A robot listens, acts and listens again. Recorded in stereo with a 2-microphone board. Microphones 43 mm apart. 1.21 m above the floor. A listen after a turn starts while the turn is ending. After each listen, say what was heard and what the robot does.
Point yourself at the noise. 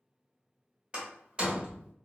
The door slam: about 25° right or 155° right. Turn 25° right.
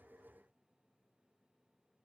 Keep listening.
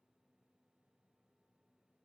I heard a door slam, but can't make it out now. It was about straight ahead or 130° right.